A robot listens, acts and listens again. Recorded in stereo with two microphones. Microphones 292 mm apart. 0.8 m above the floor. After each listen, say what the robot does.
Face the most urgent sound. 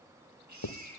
Turn 75° right.
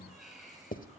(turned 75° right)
Found it: a baby crying, straight ahead, over 4 m away.